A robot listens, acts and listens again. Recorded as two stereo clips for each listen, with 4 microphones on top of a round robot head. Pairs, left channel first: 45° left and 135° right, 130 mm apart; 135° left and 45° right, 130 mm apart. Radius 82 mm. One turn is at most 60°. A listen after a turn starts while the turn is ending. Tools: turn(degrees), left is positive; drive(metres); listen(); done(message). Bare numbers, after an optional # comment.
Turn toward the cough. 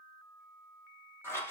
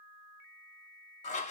listen()
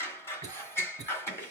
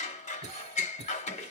# The cough: 75° right.
turn(-60)
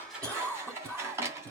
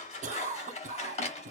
# The cough is now 35° right.
turn(-35)
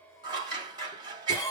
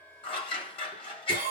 # The cough is now 20° right.
turn(-20)
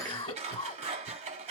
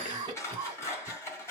done("Facing the cough, 1 to 2 m away.")